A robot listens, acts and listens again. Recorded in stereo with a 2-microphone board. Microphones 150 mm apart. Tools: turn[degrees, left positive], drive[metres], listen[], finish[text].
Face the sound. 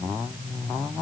Action: listen[]
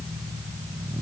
Action: listen[]
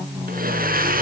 Action: turn[-90]
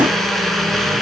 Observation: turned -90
Action: finish[Found it: a blender, straight ahead, 2 to 4 m away.]